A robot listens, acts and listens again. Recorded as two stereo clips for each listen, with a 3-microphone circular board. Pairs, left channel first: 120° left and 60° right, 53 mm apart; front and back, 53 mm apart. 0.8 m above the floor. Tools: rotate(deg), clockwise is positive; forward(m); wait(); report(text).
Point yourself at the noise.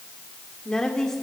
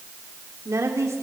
rotate(160)
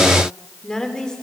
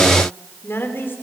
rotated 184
rotate(-45)
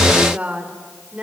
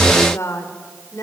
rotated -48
report("Facing the woman speaking, 2 to 4 m away.")